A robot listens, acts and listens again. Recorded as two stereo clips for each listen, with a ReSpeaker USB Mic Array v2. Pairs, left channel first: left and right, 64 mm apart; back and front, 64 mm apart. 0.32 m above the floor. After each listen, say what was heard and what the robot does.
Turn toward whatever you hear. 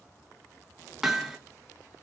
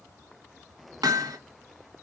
Facing the hammering.